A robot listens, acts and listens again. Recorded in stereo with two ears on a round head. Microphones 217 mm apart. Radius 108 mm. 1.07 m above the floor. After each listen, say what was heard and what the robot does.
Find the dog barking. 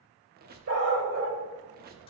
The dog barking: about 65° right or 115° right. Turn 65° right.
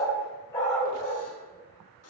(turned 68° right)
So it is at 20° left. Turn 20° left.
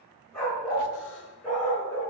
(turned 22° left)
Found it: a dog barking, straight ahead.